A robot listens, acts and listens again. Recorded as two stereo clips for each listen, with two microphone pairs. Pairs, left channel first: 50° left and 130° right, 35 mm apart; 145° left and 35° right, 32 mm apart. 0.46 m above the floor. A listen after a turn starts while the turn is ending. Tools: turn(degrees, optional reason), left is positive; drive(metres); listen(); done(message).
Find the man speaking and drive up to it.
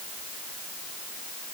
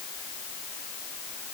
listen()
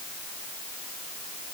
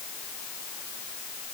listen()
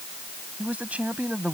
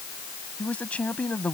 turn(degrees=-175, reason="The man speaking: 175° right.")
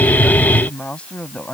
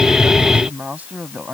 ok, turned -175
drive(metres=1.0)
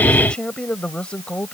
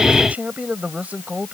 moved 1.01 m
drive(metres=1.0)
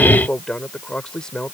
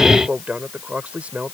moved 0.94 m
turn(degrees=-10, reason="The man speaking is now 10° right.")
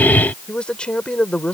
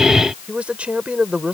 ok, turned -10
drive(metres=1.0)
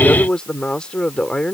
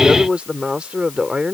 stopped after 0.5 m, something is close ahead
done("I am next to the man speaking.")